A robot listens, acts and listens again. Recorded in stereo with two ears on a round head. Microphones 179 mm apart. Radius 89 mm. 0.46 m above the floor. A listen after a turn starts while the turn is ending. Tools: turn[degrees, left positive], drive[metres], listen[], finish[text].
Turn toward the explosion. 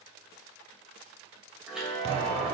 Thought: The explosion: about 30° right or 150° right.
Action: turn[-30]
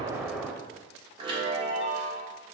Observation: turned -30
Action: finish[Found it: an explosion, straight ahead, under 1 m away.]